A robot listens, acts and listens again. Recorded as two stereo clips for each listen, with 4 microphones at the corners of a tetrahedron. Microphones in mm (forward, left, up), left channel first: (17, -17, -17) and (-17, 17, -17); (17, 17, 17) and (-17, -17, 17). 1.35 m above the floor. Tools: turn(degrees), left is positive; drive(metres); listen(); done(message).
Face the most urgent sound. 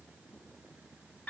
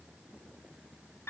listen()
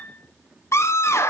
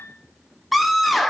turn(degrees=-45)
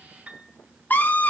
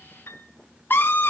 done("Found it: a scream, straight ahead, under 1 m away.")